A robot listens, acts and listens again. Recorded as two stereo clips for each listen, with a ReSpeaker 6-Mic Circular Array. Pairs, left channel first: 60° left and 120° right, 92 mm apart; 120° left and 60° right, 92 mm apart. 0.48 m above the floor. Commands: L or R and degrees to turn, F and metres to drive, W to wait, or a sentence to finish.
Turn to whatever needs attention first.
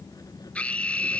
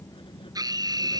R15
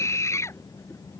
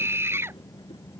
Found it: a scream, straight ahead.